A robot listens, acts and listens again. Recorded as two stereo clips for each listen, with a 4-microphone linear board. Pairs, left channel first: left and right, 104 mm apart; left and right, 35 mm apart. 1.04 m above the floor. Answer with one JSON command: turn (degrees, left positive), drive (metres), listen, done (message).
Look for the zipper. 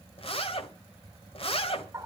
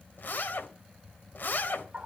{"turn": 60}
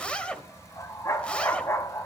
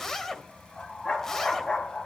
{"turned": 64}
{"turn": 10}
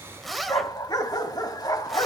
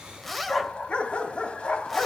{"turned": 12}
{"done": "Found it: a zipper, straight ahead, 1 to 2 m away."}